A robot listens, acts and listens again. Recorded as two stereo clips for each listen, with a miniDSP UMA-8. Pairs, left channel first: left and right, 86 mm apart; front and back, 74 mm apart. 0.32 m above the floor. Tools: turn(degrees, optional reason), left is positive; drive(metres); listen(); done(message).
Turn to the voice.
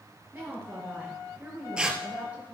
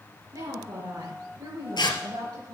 turn(degrees=-165, reason="The woman speaking: 165° right.")
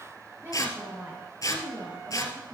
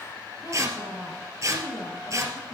turn(degrees=-30, reason="The woman speaking is now 30° right.")
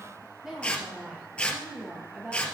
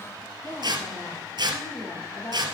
turn(degrees=-10, reason="The woman speaking is now 10° right.")
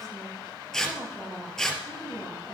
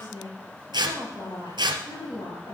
done("Found it: a woman speaking, straight ahead.")